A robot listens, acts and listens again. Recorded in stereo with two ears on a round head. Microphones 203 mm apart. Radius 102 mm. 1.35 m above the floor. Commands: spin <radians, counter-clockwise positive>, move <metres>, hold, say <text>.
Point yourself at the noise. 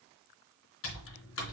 spin 1.05
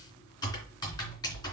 spin 0.35
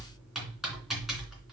say Facing the typing on a keyboard, 2 to 4 m away.